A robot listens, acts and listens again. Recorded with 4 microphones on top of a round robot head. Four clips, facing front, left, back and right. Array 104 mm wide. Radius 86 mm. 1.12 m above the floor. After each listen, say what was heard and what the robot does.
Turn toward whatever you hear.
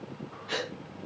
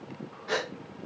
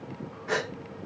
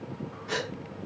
The gasp: 150° left. Turn 150° left.
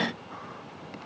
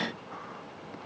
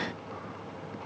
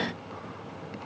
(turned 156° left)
Facing where the gasp came from. I can't hear it now.